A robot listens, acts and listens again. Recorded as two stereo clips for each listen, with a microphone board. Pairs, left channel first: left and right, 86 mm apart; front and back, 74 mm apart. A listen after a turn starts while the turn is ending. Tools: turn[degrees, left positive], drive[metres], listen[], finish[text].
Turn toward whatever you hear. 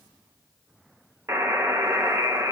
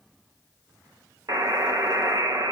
Thought: The buzzer: 145° right.
Action: turn[-145]
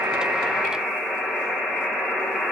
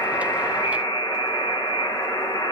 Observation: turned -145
Action: finish[Facing the buzzer.]